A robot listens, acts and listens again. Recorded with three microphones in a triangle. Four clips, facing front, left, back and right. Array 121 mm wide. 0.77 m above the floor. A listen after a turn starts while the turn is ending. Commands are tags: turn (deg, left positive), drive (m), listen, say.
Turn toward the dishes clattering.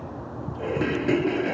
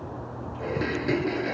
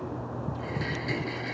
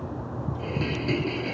<turn deg="25"/>
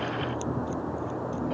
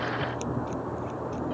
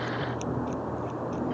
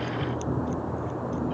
<listen/>
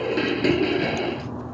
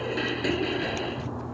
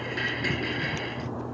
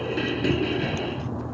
<say>Facing the dishes clattering.</say>